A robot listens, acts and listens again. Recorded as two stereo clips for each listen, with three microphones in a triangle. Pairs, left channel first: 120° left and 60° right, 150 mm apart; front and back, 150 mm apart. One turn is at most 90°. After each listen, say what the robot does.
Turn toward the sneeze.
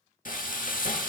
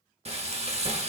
Keep listening.
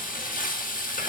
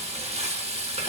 Keep listening.
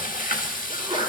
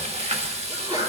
Turn 90° right.
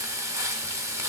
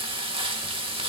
Turn 30° right.
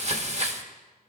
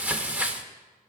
Facing where the sneeze came from. I can't hear it now.